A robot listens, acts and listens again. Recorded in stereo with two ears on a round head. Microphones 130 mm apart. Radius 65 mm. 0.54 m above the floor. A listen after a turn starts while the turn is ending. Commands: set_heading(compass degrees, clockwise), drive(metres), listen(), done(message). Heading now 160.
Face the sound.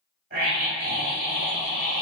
set_heading(230)
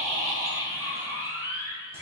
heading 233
set_heading(253)
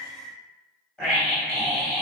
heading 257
done("Found it: a scream, straight ahead.")